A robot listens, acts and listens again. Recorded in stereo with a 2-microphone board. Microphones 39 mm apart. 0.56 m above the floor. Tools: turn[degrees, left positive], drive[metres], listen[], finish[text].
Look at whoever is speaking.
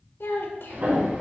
Thought: The child speaking: about 70° left or 110° left.
Action: turn[70]
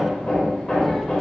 Action: listen[]
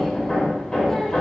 Action: listen[]
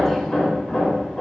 Action: finish[I heard a child speaking, but can't make it out now. It was about straight ahead or 40° left.]